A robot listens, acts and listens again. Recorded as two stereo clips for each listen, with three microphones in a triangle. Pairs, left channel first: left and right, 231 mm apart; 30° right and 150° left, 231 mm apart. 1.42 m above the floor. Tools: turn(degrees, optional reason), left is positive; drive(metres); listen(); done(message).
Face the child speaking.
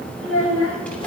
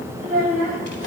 turn(degrees=100, reason="The child speaking: 100° left.")
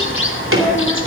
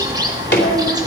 listen()
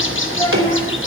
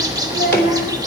listen()
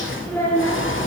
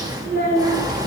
turn(degrees=10, reason="The child speaking is now 10° left.")
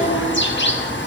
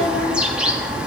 listen()
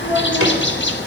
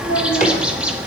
listen()
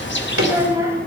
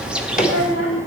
turn(degrees=-10, reason="The child speaking is now 10° right.")
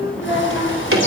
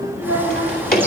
done("Facing the child speaking.")